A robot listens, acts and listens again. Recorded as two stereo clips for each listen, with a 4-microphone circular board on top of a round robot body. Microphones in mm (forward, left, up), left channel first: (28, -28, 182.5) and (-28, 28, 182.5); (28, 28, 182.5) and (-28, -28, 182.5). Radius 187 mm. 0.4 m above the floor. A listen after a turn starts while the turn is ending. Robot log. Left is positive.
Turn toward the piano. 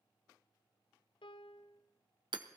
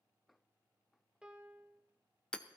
note: The piano: 55° right.
cmd yaw -55
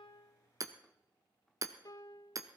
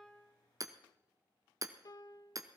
end: Found it: a piano, straight ahead.